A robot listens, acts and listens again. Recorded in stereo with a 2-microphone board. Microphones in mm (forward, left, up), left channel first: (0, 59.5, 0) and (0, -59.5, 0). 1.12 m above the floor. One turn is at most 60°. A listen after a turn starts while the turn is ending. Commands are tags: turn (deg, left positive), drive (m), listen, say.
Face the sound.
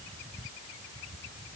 <listen/>
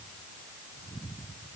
<listen/>
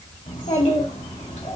<turn deg="60"/>
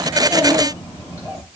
<turn deg="25"/>
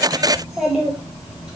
<turn deg="-10"/>
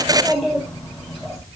<say>Facing the child speaking, over 4 m away.</say>